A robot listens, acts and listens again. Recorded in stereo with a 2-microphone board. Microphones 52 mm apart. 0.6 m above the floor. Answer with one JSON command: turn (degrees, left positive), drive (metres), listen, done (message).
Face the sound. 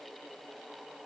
{"listen": true}
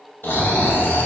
{"turn": 45}
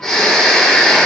{"turn": 10}
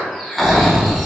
{"done": "Found it: snoring, straight ahead, 1 to 2 m away."}